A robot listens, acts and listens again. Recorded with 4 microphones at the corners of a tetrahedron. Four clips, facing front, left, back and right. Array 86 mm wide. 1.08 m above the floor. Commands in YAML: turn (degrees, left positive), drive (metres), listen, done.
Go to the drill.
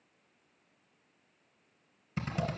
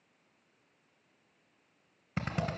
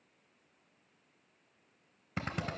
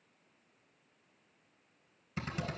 turn: 135
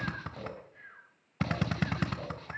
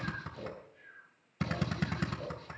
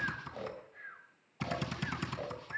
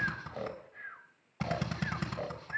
drive: 1.0
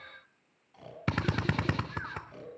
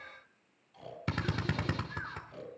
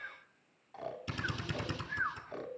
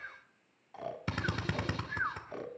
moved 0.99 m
drive: 1.0
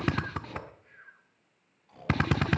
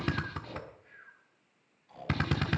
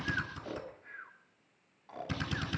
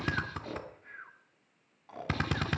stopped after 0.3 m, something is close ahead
done: "Arrived at the drill, straight ahead."